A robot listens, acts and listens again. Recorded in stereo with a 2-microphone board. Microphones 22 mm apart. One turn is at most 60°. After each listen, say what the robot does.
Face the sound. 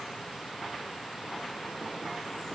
Keep listening.
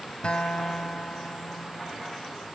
Turn 55° left.
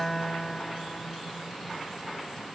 Facing the guitar.